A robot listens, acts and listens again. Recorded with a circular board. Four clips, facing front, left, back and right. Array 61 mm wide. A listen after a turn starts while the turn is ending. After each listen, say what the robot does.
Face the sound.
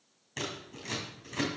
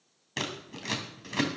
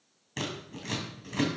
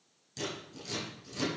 Turn 95° left.
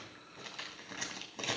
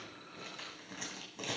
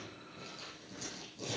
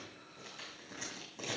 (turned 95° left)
Turn 10° left.
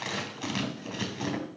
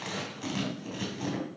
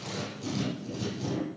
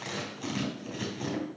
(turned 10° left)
Facing the scissors, 2 to 4 m away.